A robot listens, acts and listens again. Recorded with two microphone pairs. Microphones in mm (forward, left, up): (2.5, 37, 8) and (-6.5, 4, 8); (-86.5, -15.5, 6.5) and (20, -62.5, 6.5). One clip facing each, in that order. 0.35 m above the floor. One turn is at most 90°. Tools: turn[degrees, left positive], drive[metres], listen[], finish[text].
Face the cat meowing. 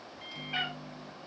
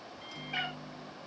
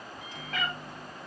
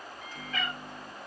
Thought: The cat meowing: 130° left.
Action: turn[90]
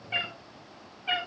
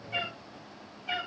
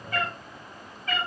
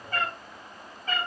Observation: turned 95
Thought: The cat meowing is now 30° left.
Action: turn[30]
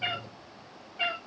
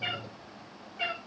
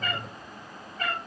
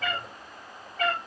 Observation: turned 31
Action: finish[Facing the cat meowing.]